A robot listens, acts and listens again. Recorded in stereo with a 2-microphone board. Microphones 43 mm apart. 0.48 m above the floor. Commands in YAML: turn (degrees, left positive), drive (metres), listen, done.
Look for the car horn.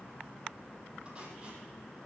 listen: true
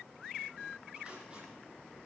listen: true
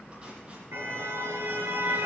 turn: -90
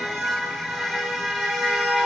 done: "Facing the car horn, over 4 m away."